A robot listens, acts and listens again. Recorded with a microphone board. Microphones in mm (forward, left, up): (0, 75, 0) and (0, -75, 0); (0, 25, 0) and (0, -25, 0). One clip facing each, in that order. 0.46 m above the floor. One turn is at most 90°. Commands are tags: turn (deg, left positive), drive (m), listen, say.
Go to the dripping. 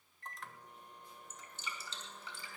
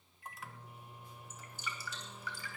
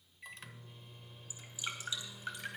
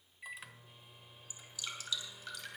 <turn deg="25"/>
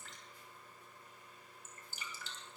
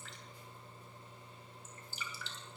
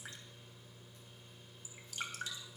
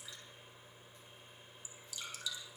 <turn deg="90"/>
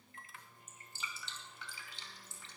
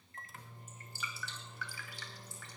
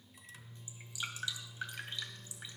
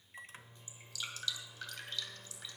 <turn deg="25"/>
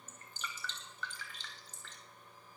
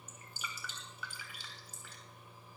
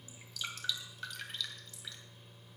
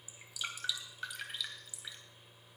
<turn deg="-10"/>
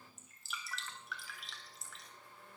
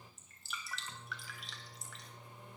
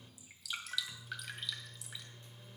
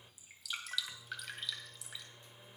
<drive m="1.0"/>
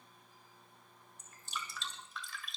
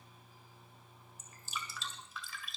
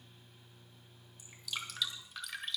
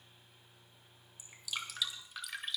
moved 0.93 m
<drive m="1.0"/>
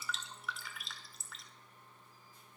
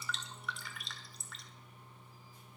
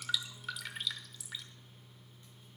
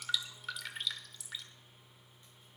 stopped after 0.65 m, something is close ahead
<say>I am next to the dripping.</say>